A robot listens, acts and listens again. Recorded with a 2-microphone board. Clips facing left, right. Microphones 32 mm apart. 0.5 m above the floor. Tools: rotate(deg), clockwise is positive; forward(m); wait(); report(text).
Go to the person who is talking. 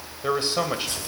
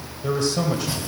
rotate(-35)
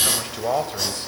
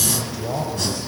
rotate(-110)
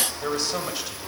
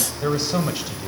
forward(1.0)
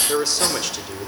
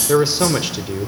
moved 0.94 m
rotate(20)
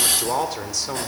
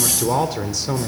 forward(1.0)
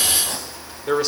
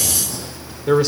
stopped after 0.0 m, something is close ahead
report("I am next to the man speaking.")